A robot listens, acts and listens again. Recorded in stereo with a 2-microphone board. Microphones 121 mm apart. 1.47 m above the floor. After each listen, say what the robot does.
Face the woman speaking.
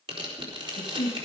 Turn 45° left.
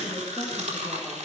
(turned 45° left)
Keep listening.
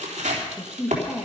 Turn 10° right.
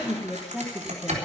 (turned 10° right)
Turn 10° right.
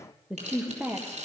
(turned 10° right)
Turn 20° right.
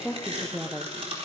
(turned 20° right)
Turn 10° right.
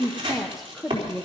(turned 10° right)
Found it: a woman speaking, straight ahead.